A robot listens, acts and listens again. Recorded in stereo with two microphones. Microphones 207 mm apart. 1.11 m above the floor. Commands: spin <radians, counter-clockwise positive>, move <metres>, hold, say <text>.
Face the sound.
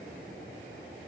hold
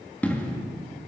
spin 0.52
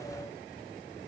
hold
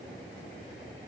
say I heard an explosion, but can't make it out now. It was about 20° right or 140° left.